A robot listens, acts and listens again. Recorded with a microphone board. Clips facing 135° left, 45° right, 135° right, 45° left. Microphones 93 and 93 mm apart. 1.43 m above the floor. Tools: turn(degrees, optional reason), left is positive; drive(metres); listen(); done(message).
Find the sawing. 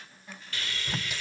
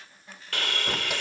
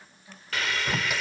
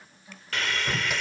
turn(degrees=-50, reason="The sawing: 50° right.")
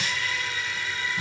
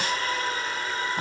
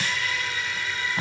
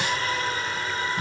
done("Facing the sawing.")